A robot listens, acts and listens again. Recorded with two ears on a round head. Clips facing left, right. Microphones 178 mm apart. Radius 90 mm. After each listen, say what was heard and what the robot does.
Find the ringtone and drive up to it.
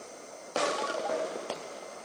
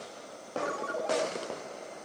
The ringtone: about 35° right or 145° right. Turn 35° right.
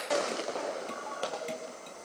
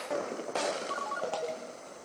So it is at 110° right. Turn 110° right.
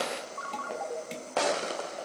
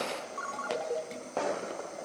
The ringtone is now 35° right. Turn 35° right.
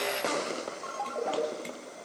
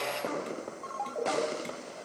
Drive 1.0 m forward.
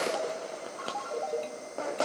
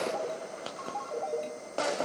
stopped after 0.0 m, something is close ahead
Blocked. The ringtone is further on, straight ahead.